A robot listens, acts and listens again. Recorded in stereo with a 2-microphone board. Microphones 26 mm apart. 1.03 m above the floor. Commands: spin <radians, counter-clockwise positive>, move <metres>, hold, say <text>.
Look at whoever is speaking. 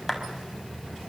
hold
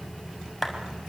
hold
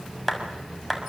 say I can't make out anyone speaking to turn to.